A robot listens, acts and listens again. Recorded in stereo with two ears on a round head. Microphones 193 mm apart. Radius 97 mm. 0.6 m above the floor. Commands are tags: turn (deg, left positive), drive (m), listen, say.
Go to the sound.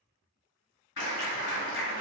<turn deg="55"/>
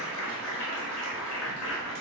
<turn deg="65"/>
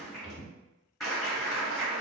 <drive m="1.0"/>
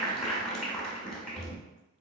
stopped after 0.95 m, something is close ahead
<say>I am next to the clap.</say>